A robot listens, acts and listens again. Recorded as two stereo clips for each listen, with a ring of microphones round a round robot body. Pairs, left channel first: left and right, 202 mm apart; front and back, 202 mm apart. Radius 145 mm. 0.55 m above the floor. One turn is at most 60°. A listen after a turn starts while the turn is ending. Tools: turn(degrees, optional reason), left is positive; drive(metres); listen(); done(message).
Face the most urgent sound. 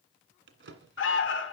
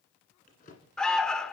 turn(degrees=60, reason="The alarm: 85° left.")
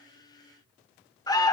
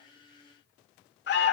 turn(degrees=20, reason="The alarm is now 20° left.")
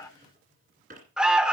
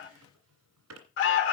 done("Facing the alarm, 1 to 2 m away.")